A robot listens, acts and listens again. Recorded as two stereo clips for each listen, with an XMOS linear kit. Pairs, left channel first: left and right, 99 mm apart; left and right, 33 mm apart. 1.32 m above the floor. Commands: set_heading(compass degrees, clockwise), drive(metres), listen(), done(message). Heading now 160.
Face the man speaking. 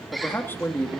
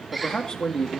set_heading(135)
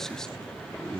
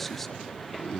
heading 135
listen()
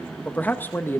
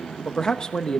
set_heading(110)
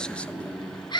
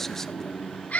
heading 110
listen()
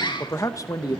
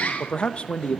set_heading(70)
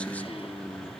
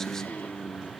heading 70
listen()
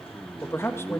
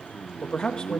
set_heading(45)
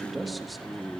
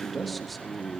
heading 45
listen()
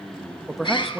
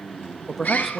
done("Found it: a man speaking, straight ahead, 1 to 2 m away.")